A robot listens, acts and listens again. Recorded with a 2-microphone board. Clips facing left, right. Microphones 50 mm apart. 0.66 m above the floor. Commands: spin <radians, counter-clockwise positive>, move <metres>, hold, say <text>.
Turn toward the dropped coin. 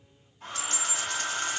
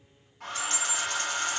spin 0.52
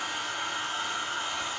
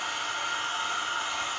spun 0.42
hold
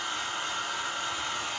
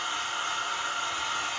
say I heard a dropped coin, but can't make it out now. It was about 25° right or 155° left.